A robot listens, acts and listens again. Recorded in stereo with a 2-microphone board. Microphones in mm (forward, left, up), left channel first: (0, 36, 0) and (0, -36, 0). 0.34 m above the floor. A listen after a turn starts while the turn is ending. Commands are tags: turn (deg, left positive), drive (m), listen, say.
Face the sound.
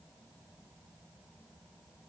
<listen/>
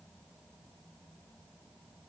<listen/>
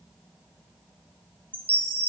<turn deg="-30"/>
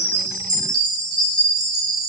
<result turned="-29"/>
<turn deg="-120"/>
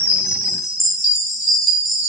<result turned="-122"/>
<say>Facing the chime.</say>